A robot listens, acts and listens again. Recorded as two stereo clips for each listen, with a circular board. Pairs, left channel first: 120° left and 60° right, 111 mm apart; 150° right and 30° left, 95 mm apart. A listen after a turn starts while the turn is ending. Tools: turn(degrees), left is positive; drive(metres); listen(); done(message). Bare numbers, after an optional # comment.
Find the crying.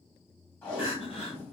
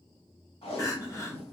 # The crying: 155° left.
turn(155)
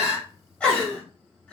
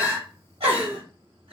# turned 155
# The crying is now 40° left.
turn(40)
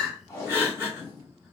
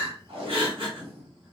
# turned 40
# The crying is now 10° left.
turn(10)
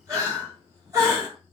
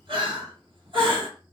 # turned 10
done("Found it: crying, straight ahead.")